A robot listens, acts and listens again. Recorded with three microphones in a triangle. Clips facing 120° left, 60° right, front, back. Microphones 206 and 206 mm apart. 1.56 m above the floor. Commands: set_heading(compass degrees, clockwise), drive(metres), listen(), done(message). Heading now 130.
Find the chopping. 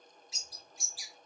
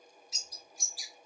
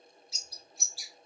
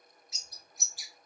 listen()
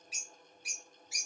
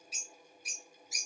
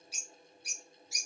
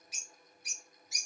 listen()
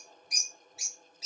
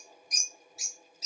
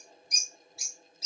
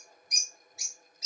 done("I can't make out chopping to turn to.")